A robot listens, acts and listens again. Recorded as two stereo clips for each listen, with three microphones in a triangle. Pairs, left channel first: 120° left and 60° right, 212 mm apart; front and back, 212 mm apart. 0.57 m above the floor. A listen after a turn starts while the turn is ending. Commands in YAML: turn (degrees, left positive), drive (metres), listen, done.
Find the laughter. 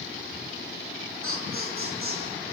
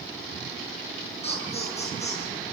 turn: -60
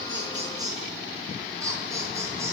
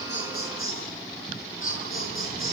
turn: 15
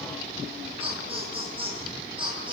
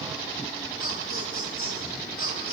done: "Found it: laughter, straight ahead."